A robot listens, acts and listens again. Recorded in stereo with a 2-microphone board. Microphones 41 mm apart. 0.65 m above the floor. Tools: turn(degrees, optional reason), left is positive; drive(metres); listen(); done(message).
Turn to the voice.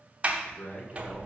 turn(degrees=60, reason="The man speaking: about 60° left or 120° left.")
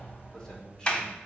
turn(degrees=20, reason="So it is at 20° left.")
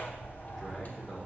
listen()
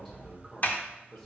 done("Found it: a man speaking, straight ahead.")